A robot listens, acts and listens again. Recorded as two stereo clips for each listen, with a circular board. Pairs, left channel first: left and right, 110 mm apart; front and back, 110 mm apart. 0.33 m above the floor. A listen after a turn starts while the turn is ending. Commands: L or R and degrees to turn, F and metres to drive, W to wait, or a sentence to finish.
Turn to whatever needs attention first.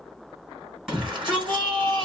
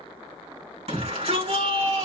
R175
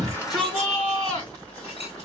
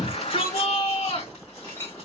L20
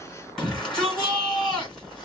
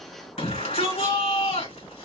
Facing the shout.